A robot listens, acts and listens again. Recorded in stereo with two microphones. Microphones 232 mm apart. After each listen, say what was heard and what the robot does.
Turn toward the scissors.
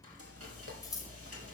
Turn 30° left.
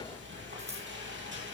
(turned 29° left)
So it is at 15° right. Turn 15° right.
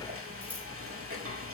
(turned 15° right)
Found it: scissors, straight ahead.